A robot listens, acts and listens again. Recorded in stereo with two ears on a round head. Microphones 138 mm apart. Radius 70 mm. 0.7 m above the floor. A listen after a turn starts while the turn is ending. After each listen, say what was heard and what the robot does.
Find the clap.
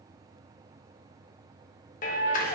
The clap: about 60° left or 120° left. Turn 60° left.
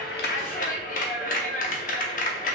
So it is at 55° left. Turn 55° left.
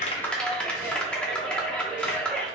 Facing the clap, under 1 m away.